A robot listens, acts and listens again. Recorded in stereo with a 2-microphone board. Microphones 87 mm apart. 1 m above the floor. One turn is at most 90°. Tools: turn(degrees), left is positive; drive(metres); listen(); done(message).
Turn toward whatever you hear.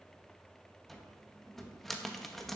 turn(degrees=30)
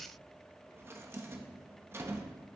turn(degrees=-30)
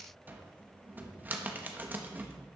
turn(degrees=-20)
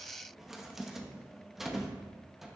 done("Found it: a cupboard door, straight ahead, under 1 m away.")